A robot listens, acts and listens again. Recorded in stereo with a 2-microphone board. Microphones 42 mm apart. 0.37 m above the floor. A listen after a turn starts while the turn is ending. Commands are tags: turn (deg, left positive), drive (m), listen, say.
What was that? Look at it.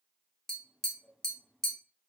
<turn deg="30"/>
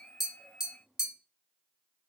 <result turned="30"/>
<turn deg="-20"/>
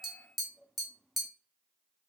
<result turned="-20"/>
<say>Found it: tapping, straight ahead.</say>